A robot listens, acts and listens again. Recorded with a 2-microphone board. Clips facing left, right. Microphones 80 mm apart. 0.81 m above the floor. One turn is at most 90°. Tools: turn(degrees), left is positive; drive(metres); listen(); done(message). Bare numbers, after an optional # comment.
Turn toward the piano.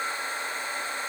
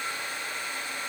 listen()
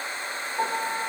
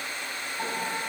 # The piano: about 75° left or 105° left.
turn(75)
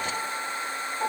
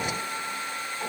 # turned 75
# So it is at 20° left.
turn(20)
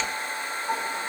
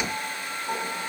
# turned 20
done("Facing the piano.")